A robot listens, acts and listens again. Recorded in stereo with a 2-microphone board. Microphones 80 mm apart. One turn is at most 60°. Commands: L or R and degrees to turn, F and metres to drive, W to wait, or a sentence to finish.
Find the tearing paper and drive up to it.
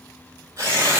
R40
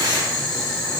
W
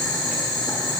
W
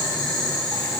I heard tearing paper, but can't make it out now. It was about straight ahead or 100° right. I did not reach it.